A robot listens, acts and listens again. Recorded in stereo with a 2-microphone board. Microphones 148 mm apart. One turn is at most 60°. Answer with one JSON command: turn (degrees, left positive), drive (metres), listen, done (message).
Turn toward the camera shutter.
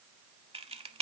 {"turn": -40}
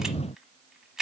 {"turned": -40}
{"done": "Found it: a camera shutter, straight ahead."}